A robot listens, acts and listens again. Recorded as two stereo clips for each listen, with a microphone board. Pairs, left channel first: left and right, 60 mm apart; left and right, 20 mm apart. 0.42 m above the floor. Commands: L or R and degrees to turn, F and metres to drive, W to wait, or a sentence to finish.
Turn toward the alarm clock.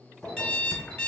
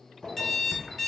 L30
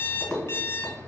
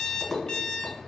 L135
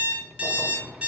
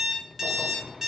R25
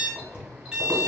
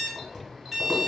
R15
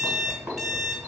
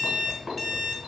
Facing the alarm clock.